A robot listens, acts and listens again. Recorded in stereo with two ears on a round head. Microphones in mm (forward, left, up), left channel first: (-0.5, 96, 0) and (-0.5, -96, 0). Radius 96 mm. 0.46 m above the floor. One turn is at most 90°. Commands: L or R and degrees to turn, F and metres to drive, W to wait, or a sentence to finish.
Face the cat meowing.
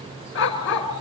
W
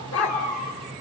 L40
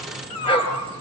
L90
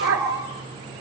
L15
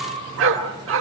R30
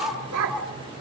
W
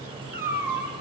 R10
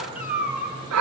Found it: a cat meowing, straight ahead.